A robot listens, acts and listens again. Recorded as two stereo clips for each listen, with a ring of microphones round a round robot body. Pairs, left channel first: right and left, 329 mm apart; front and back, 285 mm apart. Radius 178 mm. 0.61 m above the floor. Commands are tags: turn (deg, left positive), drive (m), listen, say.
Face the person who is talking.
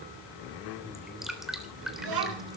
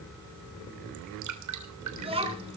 <turn deg="110"/>
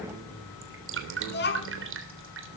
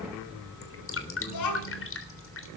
<turn deg="-30"/>
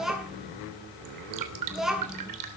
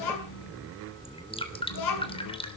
<say>Facing the child speaking, over 4 m away.</say>